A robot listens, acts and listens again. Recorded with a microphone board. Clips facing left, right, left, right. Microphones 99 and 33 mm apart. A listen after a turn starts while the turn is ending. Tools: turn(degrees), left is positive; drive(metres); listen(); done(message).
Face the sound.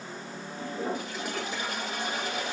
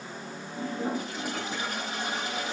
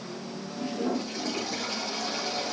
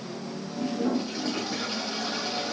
turn(degrees=-40)
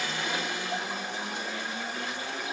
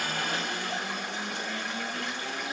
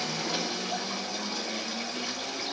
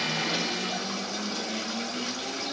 turn(degrees=-100)
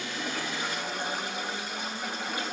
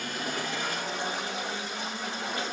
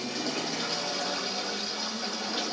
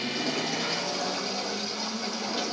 turn(degrees=10)
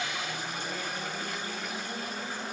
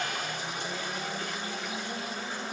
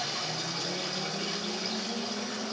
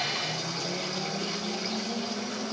done("Found it: a toilet flushing, straight ahead, over 4 m away.")